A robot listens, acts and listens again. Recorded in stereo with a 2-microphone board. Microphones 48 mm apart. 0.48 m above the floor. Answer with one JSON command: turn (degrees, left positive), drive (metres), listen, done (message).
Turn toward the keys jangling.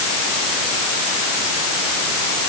{"listen": true}
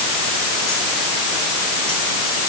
{"listen": true}
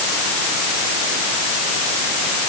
{"done": "I can't make out keys jangling."}